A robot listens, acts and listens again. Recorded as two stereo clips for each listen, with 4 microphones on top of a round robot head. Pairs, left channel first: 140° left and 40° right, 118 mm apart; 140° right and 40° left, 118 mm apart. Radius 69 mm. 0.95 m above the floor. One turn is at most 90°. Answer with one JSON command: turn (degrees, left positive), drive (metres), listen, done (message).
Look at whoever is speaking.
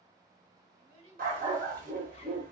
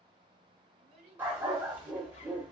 {"done": "Facing the child speaking, 2 to 4 m away."}